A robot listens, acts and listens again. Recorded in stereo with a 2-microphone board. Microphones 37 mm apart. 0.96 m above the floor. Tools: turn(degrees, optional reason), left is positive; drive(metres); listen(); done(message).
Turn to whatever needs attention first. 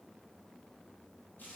listen()
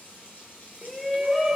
turn(degrees=-30)
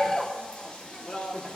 turn(degrees=30, reason="So it is at 30° left.")
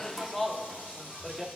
done("Found it: a shout, straight ahead, 1 to 2 m away.")